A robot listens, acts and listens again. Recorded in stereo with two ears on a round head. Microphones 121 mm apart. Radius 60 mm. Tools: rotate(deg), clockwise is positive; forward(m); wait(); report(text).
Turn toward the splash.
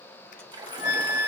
rotate(35)
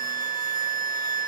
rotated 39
wait()
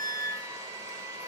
report("I heard a splash, but can't make it out now. It was about 5° left or 105° right.")